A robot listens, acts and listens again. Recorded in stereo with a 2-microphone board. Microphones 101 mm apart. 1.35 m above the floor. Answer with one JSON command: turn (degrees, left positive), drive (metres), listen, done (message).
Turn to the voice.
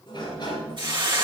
{"listen": true}
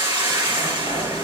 {"listen": true}
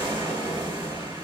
{"done": "I can't make out anyone speaking, only a hiss and a sliding door."}